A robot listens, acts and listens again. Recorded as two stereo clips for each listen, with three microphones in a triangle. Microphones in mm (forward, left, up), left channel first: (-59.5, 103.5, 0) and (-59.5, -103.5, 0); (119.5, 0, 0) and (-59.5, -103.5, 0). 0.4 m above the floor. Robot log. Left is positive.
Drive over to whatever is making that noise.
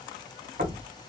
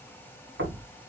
note: The knocking: 135° right.
cmd yaw -135
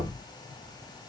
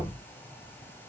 note: The knocking is now 40° right.
cmd yaw -40
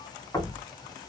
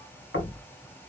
note: The knocking is now 20° left.
cmd yaw +20
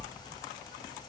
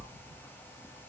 cmd idle
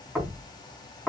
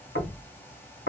cmd fwd 1.0
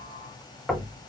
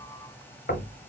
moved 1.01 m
cmd fwd 1.0
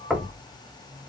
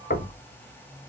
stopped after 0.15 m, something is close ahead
end: Arrived at the knocking, straight ahead.